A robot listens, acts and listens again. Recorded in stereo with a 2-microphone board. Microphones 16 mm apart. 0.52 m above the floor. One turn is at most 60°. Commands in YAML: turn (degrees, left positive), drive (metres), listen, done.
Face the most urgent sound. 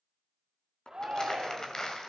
turn: -50
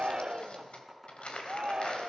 turn: -60
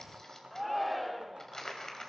done: "Facing the shout, 1 to 2 m away."